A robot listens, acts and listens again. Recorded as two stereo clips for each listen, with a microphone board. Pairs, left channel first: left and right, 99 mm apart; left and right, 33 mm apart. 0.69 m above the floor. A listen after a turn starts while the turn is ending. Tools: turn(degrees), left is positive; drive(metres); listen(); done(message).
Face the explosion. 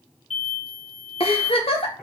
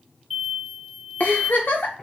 turn(degrees=30)
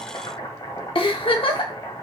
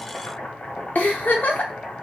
listen()
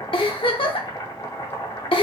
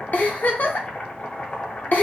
done("I heard an explosion, but can't make it out now. It was about 30° right or 150° left.")